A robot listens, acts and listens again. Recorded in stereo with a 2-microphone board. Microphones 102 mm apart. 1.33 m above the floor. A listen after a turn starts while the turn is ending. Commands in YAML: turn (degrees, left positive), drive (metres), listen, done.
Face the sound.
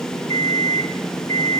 turn: 45
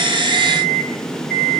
done: "Found it: an alarm clock, straight ahead."